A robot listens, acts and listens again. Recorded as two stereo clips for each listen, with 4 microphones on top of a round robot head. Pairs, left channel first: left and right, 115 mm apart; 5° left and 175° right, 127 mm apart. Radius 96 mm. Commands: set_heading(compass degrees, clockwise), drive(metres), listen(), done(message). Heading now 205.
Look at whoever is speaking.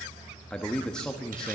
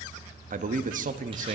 set_heading(30)
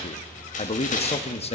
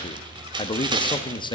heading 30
set_heading(330)
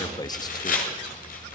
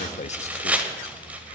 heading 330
set_heading(295)
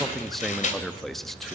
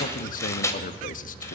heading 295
done("Facing the man speaking.")